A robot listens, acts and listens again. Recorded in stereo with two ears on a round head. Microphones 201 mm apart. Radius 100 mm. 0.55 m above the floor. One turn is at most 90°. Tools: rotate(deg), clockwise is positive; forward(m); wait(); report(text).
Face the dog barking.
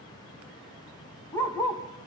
rotate(-30)
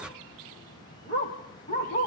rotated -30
rotate(-90)
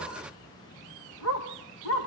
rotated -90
rotate(-85)
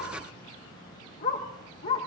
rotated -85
rotate(-35)
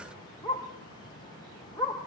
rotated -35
rotate(-10)
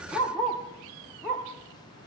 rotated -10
report("Facing the dog barking.")